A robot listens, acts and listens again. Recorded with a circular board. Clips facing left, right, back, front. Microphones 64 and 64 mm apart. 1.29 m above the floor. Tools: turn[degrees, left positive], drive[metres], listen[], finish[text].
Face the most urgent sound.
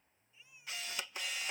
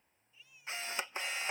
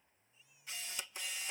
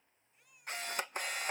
Thought: The baby crying: 20° left.
Action: turn[20]
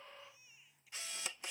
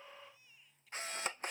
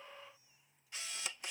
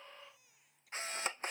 Thought: The baby crying is now 10° left.
Action: turn[10]
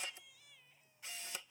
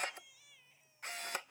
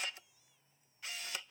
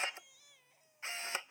Action: finish[Facing the baby crying.]